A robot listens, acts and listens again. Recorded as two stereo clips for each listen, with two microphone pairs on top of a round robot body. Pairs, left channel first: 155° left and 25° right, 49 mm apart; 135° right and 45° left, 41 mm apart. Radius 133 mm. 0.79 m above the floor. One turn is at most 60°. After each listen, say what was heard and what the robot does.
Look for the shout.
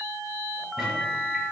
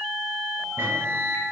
Keep listening.
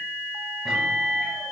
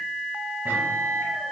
Keep listening.
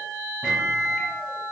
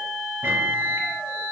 I can't make out a shout to turn to.